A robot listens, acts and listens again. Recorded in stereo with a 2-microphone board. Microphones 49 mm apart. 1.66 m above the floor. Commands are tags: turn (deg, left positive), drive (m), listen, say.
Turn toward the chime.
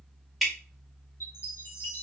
<turn deg="55"/>
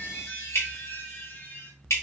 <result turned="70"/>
<turn deg="50"/>
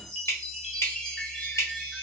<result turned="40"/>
<turn deg="10"/>
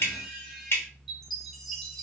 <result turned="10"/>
<say>Found it: a chime, straight ahead, under 1 m away.</say>